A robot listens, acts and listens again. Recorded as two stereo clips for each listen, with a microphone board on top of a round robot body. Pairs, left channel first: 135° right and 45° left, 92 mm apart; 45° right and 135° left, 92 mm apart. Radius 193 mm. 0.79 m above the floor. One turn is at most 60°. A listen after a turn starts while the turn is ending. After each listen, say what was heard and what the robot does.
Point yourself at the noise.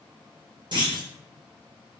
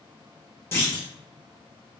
The clunk: 15° left. Turn 15° left.
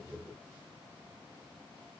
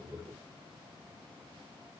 I heard a clunk from this way, but can't make it out now.